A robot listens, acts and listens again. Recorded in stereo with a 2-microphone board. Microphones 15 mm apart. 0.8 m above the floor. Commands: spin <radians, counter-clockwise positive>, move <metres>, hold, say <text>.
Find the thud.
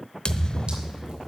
spin 0.96
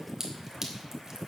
hold
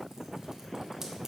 say I heard a thud, but can't make it out now. It was about straight ahead or 70° left.